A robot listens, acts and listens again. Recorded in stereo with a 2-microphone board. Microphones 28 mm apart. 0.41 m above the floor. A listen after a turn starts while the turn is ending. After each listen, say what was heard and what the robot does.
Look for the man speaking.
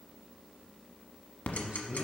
The man speaking: about 60° right or 120° right. Turn 60° right.
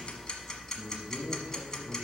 So it is at 45° right. Turn 45° right.
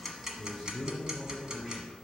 Found it: a man speaking, straight ahead, over 4 m away.